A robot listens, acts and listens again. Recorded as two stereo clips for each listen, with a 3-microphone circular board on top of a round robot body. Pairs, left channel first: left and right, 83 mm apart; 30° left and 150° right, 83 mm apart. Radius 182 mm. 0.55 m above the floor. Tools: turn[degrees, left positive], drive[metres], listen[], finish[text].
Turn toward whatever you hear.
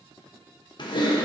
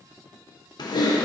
Thought: The typing on a keyboard: 65° left.
Action: turn[65]
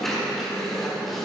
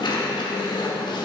Action: finish[Facing the typing on a keyboard, 1 to 2 m away.]